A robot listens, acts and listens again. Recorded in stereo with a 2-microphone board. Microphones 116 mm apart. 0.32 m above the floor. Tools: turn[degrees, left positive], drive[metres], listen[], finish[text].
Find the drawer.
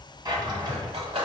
Thought: The drawer: about 40° right or 140° right.
Action: turn[-40]
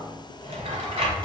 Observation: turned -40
Thought: So it is at 95° right.
Action: turn[-95]
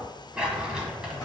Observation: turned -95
Thought: The drawer is now 10° right.
Action: turn[-10]
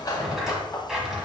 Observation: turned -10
Action: finish[Found it: a drawer, straight ahead, under 1 m away.]